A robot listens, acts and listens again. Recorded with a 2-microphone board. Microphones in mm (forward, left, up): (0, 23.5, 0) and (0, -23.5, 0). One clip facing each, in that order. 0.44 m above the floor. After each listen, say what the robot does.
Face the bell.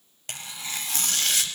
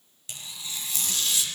Keep listening.
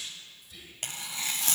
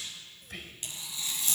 Keep listening.
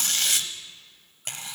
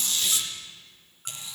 I can't make out a bell, only whispering and tearing paper.